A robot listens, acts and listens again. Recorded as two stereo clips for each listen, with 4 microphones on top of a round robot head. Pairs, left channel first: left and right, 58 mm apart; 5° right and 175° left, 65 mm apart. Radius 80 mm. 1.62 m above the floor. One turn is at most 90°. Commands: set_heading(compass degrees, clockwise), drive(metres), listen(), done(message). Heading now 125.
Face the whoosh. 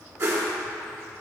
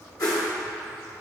set_heading(170)
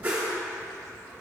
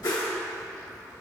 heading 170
set_heading(195)
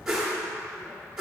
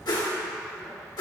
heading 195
set_heading(205)
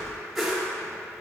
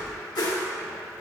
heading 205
done("Found it: a whoosh, straight ahead.")